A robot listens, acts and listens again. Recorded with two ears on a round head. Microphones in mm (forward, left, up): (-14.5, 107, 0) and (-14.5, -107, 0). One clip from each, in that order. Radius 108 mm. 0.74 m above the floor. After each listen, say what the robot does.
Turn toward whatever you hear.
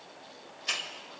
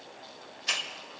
Turn 30° right.
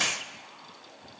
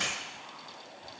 Turn 20° left.
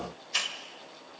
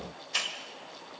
Facing the hiss.